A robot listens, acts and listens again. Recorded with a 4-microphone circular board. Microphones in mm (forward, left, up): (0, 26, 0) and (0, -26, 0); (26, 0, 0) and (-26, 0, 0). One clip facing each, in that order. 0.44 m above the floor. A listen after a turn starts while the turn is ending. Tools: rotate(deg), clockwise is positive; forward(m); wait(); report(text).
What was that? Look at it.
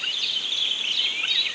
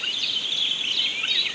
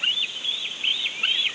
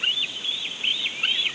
wait()
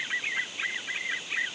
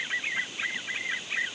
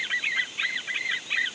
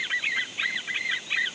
wait()
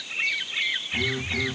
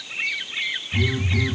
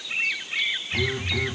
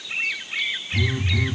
rotate(-20)
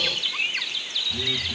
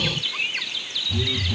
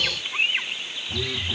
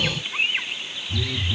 rotate(-10)
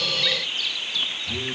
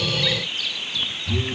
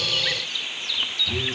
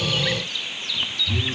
report("Found it: a phone buzzing, straight ahead, over 4 m away.")